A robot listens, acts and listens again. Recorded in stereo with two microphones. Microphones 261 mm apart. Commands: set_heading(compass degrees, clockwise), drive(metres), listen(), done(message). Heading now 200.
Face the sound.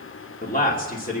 set_heading(165)
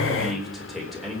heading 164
done("Facing the man speaking, 2 to 4 m away.")